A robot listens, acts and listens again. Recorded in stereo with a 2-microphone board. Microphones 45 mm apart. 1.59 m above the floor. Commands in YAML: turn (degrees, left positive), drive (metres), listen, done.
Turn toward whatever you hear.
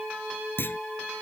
turn: 55
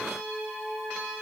listen: true
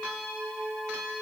done: "I heard a clunk, but can't make it out now. It was about straight ahead or 70° left."